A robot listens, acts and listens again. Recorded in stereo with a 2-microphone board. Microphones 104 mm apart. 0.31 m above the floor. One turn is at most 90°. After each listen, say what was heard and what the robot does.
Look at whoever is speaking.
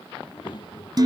The child speaking: about 45° left or 135° left. Turn 45° left.
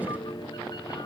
Keep listening.
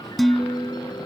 Keep listening.
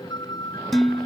I heard a child speaking, but can't make it out now. It was about straight ahead or 90° left.